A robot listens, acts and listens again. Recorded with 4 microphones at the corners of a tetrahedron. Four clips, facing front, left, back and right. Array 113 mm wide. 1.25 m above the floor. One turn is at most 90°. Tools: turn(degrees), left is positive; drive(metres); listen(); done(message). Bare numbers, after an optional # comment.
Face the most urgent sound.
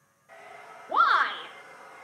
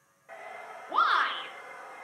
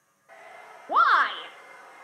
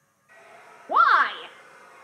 # The shout: 130° right.
turn(-90)
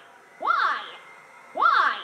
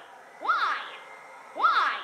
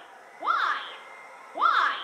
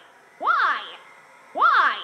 # The shout is now 80° right.
turn(-80)
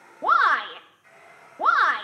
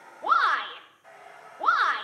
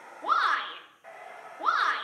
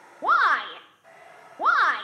# The shout is now 45° right.
turn(-45)
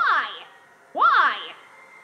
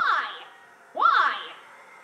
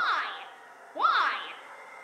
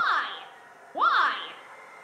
done("Facing the shout.")